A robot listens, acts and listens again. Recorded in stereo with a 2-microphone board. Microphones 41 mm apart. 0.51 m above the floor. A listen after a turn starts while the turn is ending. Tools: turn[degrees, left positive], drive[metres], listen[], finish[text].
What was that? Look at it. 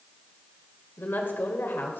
Thought: The woman speaking: about 60° left or 120° left.
Action: turn[60]
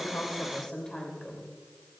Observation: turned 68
Thought: So it is at 20° left.
Action: turn[20]
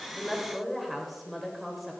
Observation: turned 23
Action: finish[Found it: a woman speaking, straight ahead.]